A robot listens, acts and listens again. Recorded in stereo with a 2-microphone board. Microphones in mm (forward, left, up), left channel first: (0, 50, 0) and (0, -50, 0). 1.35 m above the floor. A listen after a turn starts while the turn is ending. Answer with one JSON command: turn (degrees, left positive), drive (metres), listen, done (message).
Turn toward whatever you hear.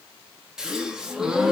{"turn": -30}
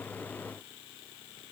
{"listen": true}
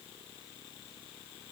{"done": "I heard a gasp, but can't make it out now. It was about 25° left or 145° right."}